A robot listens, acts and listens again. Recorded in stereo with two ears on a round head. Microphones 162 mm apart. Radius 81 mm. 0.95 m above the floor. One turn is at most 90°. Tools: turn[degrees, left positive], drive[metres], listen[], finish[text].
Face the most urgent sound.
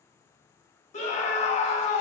Thought: The scream: about 40° left or 140° left.
Action: turn[40]
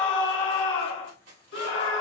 Thought: So it is at 100° left.
Action: turn[90]
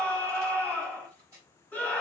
Thought: The scream is now 10° left.
Action: turn[10]
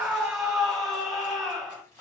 Action: finish[Facing the scream.]